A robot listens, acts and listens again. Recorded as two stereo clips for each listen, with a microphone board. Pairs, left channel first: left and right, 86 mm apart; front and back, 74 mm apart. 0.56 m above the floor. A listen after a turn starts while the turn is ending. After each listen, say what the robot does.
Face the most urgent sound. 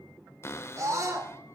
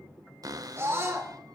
Turn 135° right.
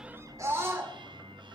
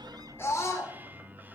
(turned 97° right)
Turn 35° right.
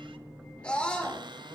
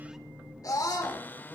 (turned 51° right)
Turn 15° left.
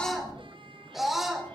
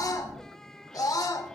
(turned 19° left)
Facing the scream, 2 to 4 m away.